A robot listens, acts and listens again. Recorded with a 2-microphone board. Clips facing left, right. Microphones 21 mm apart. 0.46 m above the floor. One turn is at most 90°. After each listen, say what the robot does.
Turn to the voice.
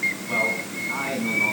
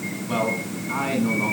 Turn 20° right.
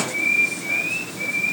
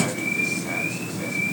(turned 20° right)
Keep listening.
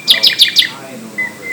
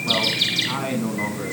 Turn 90° right.
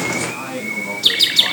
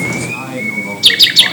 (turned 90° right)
Turn 10° right.
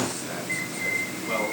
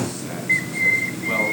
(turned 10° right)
Keep listening.
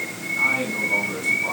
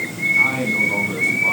Facing the man speaking, over 4 m away.